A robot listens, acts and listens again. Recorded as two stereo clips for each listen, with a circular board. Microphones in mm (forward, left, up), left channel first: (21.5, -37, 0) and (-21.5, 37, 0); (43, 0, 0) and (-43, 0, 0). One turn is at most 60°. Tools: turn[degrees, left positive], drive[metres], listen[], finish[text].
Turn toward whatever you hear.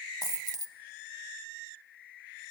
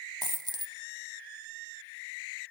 Thought: The dropped coin: 160° left.
Action: turn[60]
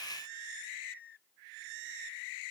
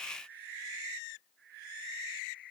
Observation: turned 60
Thought: Nothing new. It was at 100° left.
Action: turn[60]
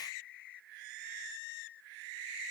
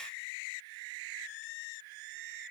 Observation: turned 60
Thought: Nothing new. It was at 40° left.
Action: turn[40]
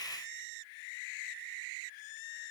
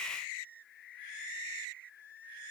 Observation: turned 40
Action: finish[Facing where the dropped coin came from. I can't hear it now.]